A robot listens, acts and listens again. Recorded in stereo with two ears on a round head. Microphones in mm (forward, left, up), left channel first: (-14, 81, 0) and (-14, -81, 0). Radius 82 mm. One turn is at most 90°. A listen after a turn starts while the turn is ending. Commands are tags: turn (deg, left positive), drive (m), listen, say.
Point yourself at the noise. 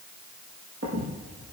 <turn deg="-70"/>
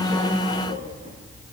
<turn deg="-45"/>
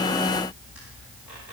<say>Found it: a squeak, straight ahead, over 4 m away.</say>